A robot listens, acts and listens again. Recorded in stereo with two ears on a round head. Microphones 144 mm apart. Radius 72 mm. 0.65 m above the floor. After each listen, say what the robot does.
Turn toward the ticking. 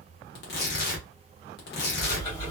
Turn 35° left.
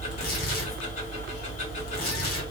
Turn 105° left.
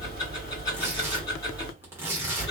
Turn 30° left.
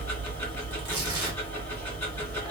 Turn 15° left.
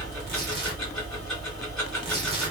Found it: ticking, straight ahead, 2 to 4 m away.